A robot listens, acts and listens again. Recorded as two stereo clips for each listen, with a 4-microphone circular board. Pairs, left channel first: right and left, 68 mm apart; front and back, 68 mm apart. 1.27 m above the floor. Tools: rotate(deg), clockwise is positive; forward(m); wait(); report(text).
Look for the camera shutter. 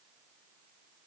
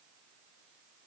wait()
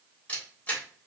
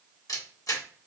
rotate(25)
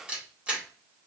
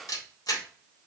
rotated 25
rotate(-15)
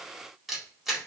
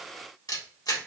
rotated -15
report("Found it: a camera shutter, straight ahead.")